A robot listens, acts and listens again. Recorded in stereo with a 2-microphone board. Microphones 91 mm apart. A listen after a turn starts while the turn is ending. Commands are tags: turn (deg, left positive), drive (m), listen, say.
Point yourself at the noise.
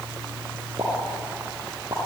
<turn deg="-35"/>
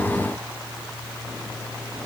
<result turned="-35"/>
<listen/>
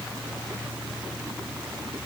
<say>I heard a pop, but can't make it out now. It was about straight ahead or 110° right.</say>